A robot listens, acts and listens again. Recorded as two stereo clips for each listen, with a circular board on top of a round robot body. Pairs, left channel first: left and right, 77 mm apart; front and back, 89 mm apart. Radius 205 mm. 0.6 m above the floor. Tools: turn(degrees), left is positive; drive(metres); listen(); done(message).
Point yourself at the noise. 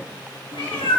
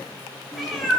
turn(degrees=85)
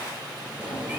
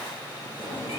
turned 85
turn(degrees=-20)
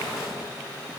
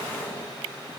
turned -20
listen()
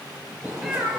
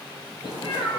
done("Found it: a cat meowing, straight ahead, over 4 m away.")